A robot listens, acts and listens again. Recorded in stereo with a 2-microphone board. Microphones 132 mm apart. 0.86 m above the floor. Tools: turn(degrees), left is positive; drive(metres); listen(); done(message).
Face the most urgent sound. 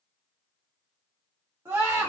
turn(degrees=-20)
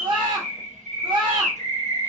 turn(degrees=-140)
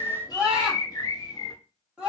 turn(degrees=-10)
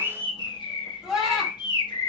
done("Facing the scream, 1 to 2 m away.")